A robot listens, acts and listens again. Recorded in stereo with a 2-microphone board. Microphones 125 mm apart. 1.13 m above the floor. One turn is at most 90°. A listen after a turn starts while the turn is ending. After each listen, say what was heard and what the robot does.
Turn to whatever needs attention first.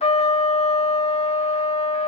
Keep listening.
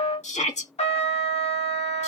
The shout: about 70° left or 110° left. Turn 70° left.
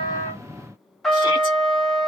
Keep listening.
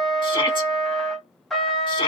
So it is at 40° left. Turn 40° left.
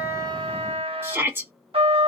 The shout is now 20° right. Turn 20° right.
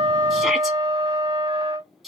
Facing the shout, 1 to 2 m away.